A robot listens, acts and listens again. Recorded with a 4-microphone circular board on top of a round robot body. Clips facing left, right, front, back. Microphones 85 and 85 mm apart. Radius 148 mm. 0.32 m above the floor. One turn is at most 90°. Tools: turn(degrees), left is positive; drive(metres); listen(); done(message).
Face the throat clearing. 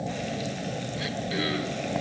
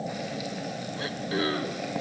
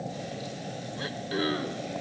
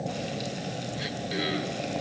turn(degrees=-40)
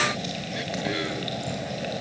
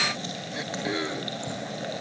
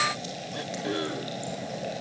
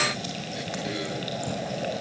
turn(degrees=-25)
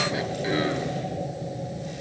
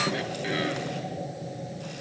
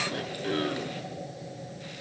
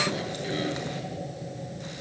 listen()
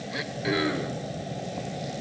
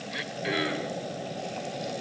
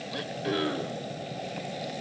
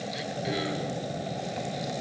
turn(degrees=15)
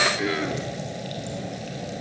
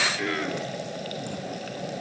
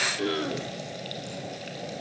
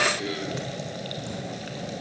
done("Found it: throat clearing, straight ahead, 1 to 2 m away.")